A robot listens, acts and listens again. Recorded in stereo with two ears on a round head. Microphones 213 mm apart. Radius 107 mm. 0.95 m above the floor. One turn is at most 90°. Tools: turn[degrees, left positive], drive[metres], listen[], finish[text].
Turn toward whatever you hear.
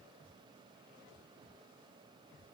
Action: listen[]
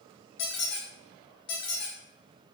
Thought: The squeak: about 50° left or 130° left.
Action: turn[50]
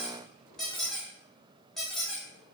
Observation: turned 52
Action: finish[Found it: a squeak, straight ahead, under 1 m away.]